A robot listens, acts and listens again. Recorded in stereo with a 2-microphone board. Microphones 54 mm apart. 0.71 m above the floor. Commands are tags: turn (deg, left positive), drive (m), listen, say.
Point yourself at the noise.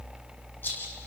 <turn deg="40"/>
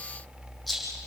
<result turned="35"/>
<say>Found it: a rattle, straight ahead.</say>